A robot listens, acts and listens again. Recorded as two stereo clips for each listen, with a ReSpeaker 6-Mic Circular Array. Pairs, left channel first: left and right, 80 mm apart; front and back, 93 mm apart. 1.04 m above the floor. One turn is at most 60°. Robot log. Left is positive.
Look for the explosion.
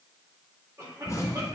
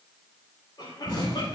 note: The explosion: 40° left.
cmd yaw +40
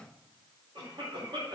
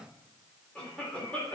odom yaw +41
end: Facing where the explosion came from. I can't hear it now.